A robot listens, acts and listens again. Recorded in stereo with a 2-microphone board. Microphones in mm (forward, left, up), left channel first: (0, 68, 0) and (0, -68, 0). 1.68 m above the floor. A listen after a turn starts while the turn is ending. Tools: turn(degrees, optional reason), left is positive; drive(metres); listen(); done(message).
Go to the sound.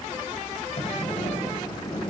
turn(degrees=50, reason="The sliding door: about 50° left or 130° left.")
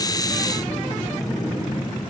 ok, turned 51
drive(metres=1.0)
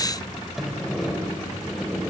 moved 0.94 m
drive(metres=1.0)
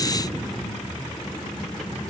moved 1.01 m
drive(metres=1.0)
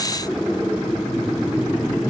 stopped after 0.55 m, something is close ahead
done("I am next to the sliding door.")